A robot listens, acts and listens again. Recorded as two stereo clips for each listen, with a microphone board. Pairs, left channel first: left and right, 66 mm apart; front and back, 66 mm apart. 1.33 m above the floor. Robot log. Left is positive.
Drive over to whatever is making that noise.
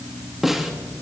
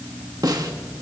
note: The snare drum: 175° right.
cmd yaw -175
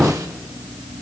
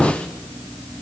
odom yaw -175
cmd idle
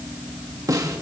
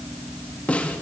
note: The snare drum is now 70° right.
cmd yaw -70
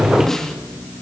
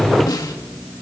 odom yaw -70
cmd fwd 1.0
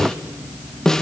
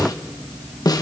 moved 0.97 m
note: The snare drum is now 10° left.
cmd yaw +10
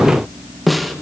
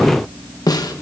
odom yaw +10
cmd fwd 1.0
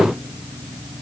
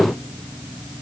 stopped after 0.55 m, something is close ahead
cmd idle
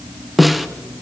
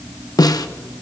end: I am next to the snare drum.